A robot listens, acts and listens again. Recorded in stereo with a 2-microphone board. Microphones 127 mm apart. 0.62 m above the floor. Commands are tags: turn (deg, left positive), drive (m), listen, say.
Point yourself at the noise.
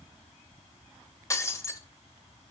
<turn deg="25"/>
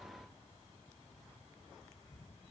<listen/>
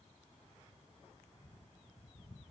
<say>I heard breaking glass, but can't make it out now. It was about straight ahead or 130° left.</say>